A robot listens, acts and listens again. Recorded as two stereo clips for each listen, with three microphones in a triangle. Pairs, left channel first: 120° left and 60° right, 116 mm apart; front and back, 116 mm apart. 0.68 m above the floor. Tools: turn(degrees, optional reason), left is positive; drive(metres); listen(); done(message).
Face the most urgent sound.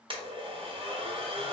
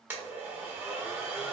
listen()
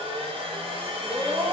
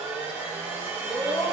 done("Found it: a scream, straight ahead, under 1 m away.")